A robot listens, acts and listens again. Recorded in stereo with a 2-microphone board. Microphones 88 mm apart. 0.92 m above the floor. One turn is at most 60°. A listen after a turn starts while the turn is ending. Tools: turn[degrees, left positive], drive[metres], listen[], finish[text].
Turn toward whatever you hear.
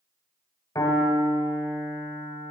Thought: The piano: about 45° left or 135° left.
Action: turn[45]
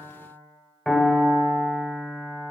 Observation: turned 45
Action: finish[Facing the piano.]